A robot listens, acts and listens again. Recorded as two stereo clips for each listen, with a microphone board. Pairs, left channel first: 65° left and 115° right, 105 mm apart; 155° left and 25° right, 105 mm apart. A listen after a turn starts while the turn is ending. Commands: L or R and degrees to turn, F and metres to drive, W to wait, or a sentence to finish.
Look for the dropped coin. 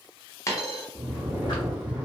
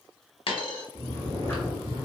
L130
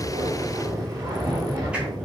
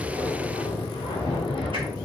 I heard a dropped coin from this way, but can't make it out now.